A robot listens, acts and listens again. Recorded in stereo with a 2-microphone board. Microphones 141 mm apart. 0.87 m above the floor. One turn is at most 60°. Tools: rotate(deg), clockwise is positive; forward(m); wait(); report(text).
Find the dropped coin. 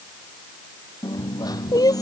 rotate(-25)
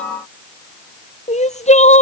wait()
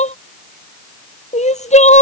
report("I heard a dropped coin, but can't make it out now. It was about straight ahead or 130° left.")